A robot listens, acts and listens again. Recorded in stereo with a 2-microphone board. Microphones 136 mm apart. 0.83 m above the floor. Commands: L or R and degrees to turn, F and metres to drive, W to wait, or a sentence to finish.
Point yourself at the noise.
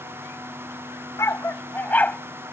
L30
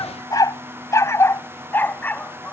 L30
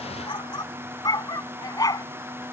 L155
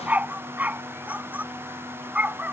R10
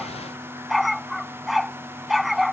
Found it: a dog barking, straight ahead.